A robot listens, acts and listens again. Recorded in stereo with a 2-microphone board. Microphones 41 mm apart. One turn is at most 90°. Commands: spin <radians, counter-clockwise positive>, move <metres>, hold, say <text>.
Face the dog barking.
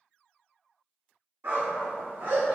spin -1.57
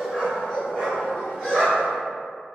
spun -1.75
say Found it: a dog barking, straight ahead.